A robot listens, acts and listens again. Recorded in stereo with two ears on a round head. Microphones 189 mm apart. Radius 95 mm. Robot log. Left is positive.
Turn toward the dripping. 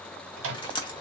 note: The dripping: about 20° left or 160° left.
cmd yaw +20
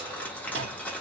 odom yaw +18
end: Facing the dripping.